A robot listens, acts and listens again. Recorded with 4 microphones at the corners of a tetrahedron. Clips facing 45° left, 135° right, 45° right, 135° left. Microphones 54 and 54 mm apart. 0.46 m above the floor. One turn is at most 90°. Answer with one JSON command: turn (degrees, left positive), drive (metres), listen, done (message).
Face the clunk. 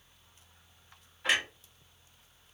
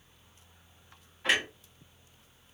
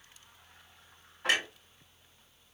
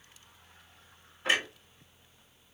{"turn": -45}
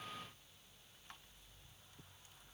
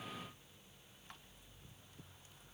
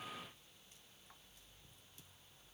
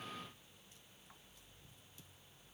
{"done": "Facing where the clunk came from. I can't hear it now."}